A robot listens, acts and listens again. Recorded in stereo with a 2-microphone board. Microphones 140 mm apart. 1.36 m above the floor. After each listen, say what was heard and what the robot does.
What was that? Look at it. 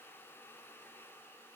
Keep listening.
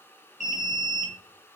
The alarm: about 60° left or 120° left. Turn 60° left.
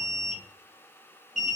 Found it: an alarm, straight ahead.